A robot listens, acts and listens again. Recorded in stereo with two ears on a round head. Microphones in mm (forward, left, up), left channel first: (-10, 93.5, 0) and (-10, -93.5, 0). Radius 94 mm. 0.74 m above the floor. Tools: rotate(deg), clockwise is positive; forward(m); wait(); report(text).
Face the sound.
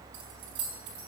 rotate(60)
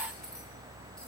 wait()
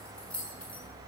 report("Facing the keys jangling, over 4 m away.")